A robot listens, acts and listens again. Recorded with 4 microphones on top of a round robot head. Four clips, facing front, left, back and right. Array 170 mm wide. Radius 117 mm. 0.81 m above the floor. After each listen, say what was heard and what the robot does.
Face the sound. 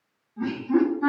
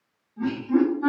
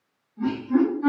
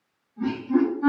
Facing the laughter, 1 to 2 m away.